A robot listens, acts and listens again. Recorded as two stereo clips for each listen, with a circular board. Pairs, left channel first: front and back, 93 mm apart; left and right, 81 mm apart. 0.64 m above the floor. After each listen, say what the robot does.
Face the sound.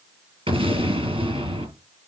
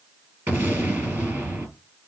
Turn 155° right.
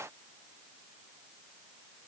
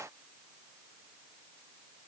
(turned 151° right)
Facing where the explosion came from. I can't hear it now.